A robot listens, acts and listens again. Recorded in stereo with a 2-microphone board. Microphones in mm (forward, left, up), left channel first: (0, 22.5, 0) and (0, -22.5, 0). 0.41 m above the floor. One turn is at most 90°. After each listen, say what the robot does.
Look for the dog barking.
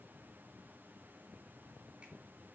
Keep listening.
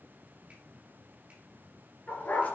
Turn 45° left.
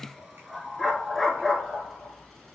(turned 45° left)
Found it: a dog barking, straight ahead, 2 to 4 m away.